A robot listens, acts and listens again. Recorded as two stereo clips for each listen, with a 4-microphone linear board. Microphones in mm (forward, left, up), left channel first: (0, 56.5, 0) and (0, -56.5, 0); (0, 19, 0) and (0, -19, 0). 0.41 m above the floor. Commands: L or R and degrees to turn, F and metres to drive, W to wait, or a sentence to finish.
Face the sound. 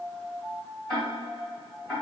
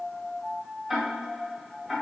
L30
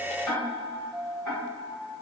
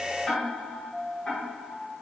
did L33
L145
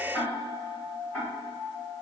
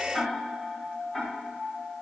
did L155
R10
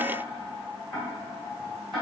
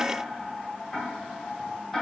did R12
Facing the ticking.